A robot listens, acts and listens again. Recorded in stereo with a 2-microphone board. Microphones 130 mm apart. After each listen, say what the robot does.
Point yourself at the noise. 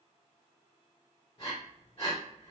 Turn 50° left.
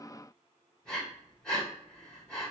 Facing the breathing.